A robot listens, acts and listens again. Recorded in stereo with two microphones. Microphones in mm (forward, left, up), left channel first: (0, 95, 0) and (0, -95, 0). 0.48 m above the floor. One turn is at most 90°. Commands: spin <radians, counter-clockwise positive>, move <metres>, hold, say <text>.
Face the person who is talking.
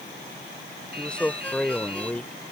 spin 0.52
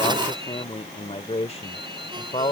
spin 1.57
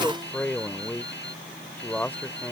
spin 0.17
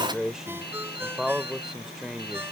say Found it: a man speaking, straight ahead.